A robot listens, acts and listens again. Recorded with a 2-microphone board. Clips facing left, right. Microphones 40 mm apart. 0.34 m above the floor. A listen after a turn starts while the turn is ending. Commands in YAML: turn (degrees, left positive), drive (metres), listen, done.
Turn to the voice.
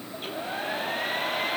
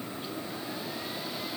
listen: true
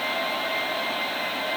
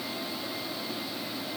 listen: true
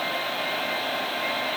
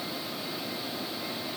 done: "I can't make out anyone speaking, only a hair dryer."